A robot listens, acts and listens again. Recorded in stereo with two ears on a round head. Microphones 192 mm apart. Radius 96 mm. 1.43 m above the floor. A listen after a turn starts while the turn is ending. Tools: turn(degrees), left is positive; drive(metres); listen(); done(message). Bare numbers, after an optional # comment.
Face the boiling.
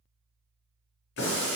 # The boiling: about 50° left or 130° left.
turn(50)
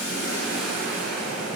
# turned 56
done("Found it: boiling, straight ahead, under 1 m away.")